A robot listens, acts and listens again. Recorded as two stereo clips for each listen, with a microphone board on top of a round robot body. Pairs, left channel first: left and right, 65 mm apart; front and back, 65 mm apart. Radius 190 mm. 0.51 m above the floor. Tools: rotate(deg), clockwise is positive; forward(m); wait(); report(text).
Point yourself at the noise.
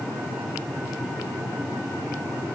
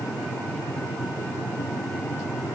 wait()
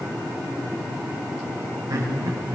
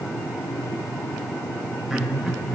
rotate(100)
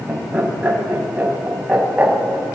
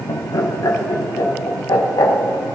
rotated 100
rotate(25)
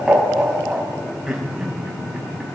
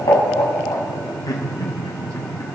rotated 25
rotate(10)
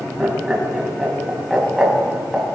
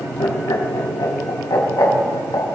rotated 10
report("Facing the laughter, over 4 m away.")